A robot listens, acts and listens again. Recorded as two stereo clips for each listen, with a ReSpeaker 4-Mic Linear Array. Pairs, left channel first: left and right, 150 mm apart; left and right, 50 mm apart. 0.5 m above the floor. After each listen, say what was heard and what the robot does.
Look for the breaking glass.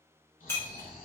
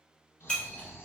The breaking glass: about 15° left or 165° left. Turn 15° left.
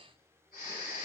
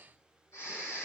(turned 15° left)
Keep listening.
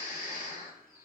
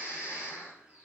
I heard breaking glass, but can't make it out now. It was about straight ahead or 150° left.